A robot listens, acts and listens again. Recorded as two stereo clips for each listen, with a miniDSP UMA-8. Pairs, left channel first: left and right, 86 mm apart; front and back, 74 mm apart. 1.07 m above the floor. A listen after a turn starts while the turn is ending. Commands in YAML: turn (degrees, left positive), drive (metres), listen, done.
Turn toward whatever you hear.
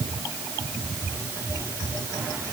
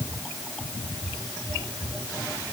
listen: true
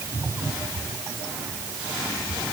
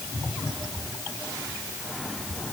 listen: true
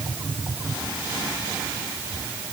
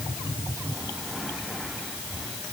done: "I can't make out anything."